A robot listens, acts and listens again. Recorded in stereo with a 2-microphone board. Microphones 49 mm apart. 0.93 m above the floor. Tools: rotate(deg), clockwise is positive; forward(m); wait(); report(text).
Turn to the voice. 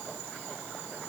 wait()
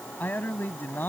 rotate(-45)
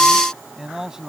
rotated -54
rotate(10)
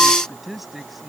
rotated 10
report("Found it: a man speaking, straight ahead.")